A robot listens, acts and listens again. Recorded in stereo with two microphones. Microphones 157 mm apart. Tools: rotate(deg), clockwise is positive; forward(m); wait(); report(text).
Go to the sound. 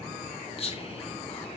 rotate(-40)
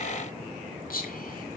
rotate(-100)
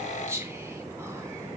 rotate(15)
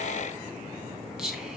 forward(1.0)
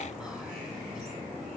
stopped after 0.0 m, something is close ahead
wait()
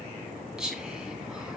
report("Something is in my way. I am facing the whispering but have not reached it.")